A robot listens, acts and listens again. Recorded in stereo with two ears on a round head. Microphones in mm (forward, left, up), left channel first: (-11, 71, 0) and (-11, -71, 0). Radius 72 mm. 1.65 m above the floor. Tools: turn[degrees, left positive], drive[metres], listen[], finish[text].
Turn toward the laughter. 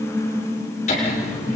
Thought: The laughter: about 45° left or 135° left.
Action: turn[45]
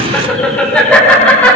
Thought: So it is at 10° left.
Action: turn[10]
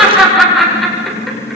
Action: finish[Found it: laughter, straight ahead.]